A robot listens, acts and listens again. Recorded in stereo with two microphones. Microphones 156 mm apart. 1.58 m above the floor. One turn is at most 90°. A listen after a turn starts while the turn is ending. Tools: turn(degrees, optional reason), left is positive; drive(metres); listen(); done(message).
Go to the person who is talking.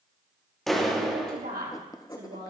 turn(degrees=-90)
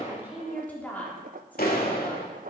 turn(degrees=10, reason="So it is at 10° left.")
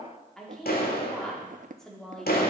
drive(metres=1.0)
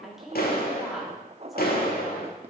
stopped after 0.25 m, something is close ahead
done("Something is in my way. I am facing the woman speaking but have not reached it.")